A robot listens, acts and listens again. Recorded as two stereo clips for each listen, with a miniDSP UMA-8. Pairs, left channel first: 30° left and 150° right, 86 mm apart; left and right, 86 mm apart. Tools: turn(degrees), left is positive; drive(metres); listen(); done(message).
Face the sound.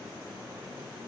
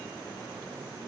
listen()
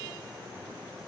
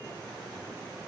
listen()
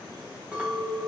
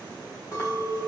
turn(degrees=135)
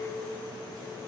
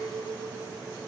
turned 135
turn(degrees=20)
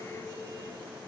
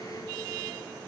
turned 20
listen()
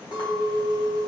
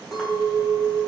done("Facing the clink, under 1 m away.")